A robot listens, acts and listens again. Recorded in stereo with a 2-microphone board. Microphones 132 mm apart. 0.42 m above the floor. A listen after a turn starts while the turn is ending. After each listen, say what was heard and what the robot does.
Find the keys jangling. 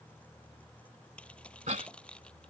Turn 30° left.
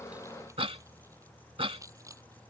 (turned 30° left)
So it is at 25° right. Turn 25° right.
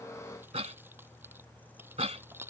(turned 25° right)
The keys jangling is now 15° right. Turn 15° right.
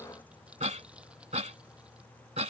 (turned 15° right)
Keep listening.
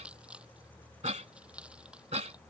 The keys jangling is now 10° right. Turn 10° right.
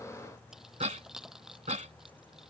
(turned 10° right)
Found it: keys jangling, straight ahead.